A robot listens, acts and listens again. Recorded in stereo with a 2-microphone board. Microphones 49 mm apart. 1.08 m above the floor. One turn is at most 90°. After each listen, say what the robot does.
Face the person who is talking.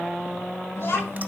Turn 45° left.
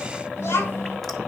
Turn 90° left.
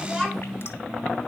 Turn 10° left.
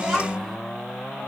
Facing the child speaking.